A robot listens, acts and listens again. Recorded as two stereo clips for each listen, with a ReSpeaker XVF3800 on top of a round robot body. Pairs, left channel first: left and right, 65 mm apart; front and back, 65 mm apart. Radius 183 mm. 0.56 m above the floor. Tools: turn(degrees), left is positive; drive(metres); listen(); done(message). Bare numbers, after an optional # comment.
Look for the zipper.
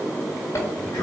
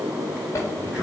# The zipper: 45° left.
turn(45)
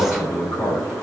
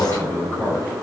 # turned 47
listen()
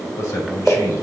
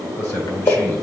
done("Found it: a zipper, straight ahead, 1 to 2 m away.")